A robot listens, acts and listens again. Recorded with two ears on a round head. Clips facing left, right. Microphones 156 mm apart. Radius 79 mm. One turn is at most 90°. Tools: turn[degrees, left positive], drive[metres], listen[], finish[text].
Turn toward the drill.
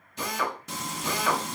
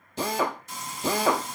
Thought: The drill: about 30° right or 150° right.
Action: turn[-30]
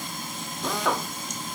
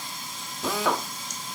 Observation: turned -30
Action: finish[Found it: a drill, straight ahead.]